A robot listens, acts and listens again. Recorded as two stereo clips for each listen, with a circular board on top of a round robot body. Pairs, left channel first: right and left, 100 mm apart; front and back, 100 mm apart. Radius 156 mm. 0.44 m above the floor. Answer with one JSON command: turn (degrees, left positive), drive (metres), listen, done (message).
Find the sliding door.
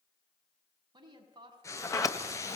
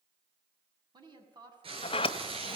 {"turn": -35}
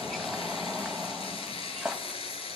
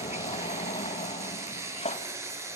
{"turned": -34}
{"done": "Facing the sliding door, 1 to 2 m away."}